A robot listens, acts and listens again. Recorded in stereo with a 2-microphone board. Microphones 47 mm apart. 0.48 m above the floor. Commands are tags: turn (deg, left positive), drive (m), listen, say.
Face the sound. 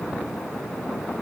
<listen/>
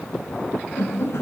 <turn deg="90"/>
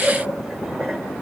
<listen/>
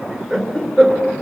<turn deg="10"/>
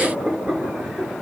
<say>Facing the laughter.</say>